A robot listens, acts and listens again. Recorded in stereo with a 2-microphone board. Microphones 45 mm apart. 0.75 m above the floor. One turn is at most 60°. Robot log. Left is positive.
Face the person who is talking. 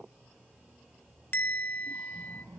cmd yaw -60
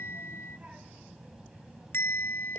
note: So it is at 10° right.
cmd yaw -10
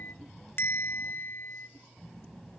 note: The child speaking is now 10° left.
cmd yaw +10
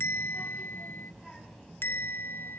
end: Facing the child speaking.